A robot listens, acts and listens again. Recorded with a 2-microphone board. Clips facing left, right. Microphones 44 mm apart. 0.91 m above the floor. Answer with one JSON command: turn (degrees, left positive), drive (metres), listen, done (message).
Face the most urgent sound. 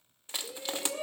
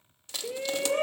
{"turn": -50}
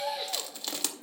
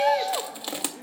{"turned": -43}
{"turn": -80}
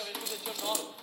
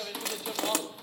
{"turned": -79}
{"done": "Facing the shout."}